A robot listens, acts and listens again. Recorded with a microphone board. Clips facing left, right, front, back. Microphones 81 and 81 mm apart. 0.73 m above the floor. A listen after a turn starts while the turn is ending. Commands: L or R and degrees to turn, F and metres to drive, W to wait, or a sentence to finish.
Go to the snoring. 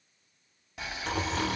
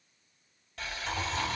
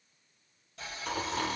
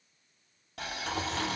L75
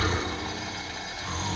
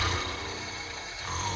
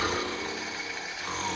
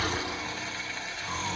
F1.0
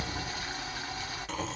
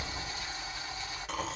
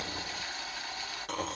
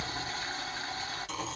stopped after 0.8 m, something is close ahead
I am next to the snoring.